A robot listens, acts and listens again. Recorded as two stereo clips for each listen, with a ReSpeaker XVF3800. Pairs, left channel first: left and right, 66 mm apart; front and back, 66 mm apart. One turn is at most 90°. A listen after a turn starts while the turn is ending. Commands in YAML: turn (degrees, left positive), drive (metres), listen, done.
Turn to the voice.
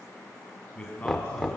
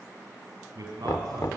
turn: 90
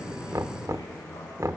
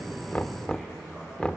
turn: 70
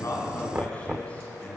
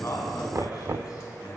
turn: 20
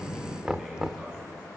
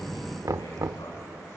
listen: true
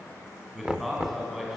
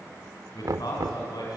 done: "Found it: a man speaking, straight ahead."